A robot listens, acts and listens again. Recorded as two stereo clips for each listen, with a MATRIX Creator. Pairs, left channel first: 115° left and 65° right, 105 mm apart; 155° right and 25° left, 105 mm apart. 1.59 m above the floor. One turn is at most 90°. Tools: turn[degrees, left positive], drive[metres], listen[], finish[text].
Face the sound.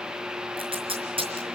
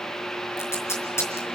Thought: The tape being pulled: 95° right.
Action: turn[-90]
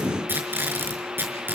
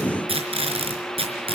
Action: finish[Facing the tape being pulled.]